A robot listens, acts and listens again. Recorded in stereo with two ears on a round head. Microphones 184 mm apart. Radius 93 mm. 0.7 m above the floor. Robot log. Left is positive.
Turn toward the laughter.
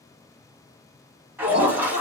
note: The laughter: about 30° right or 150° right.
cmd yaw -30
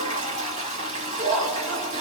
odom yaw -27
note: So it is at 130° right.
cmd yaw -130
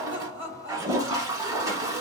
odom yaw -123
note: The laughter is now 10° right.
cmd yaw -10
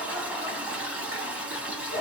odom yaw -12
end: Facing the laughter.